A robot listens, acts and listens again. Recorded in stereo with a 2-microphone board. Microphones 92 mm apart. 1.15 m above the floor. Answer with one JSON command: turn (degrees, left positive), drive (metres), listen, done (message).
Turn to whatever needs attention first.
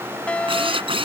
{"turn": 30}
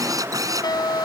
{"turn": 135}
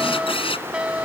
{"turn": -10}
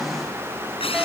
{"listen": true}
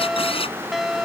{"done": "Facing the fire alarm."}